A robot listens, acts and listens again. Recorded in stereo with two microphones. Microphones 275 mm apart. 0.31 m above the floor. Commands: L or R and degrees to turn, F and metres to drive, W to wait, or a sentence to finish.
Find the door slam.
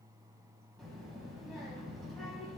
W
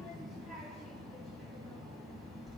W
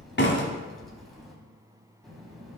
L45
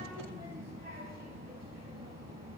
W
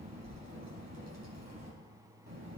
I heard a door slam, but can't make it out now. It was about straight ahead or 90° left.